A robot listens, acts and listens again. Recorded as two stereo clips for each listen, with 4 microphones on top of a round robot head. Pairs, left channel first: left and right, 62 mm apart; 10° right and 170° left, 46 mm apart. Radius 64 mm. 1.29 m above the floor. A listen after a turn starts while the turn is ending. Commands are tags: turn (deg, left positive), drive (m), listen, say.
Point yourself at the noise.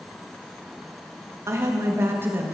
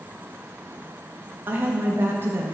<turn deg="-145"/>
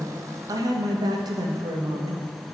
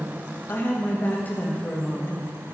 <turn deg="-80"/>
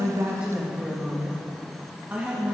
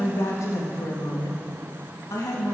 <turn deg="-15"/>
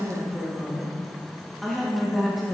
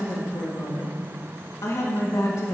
<say>Found it: a woman speaking, straight ahead.</say>